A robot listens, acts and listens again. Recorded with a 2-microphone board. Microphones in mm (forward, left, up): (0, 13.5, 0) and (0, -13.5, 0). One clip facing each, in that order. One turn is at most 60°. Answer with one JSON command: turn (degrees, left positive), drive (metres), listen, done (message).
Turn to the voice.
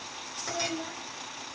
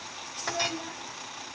{"turn": 30}
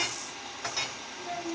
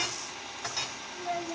{"turn": -25}
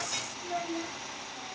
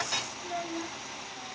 {"turn": 10}
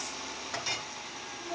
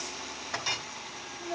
{"done": "Facing the child speaking."}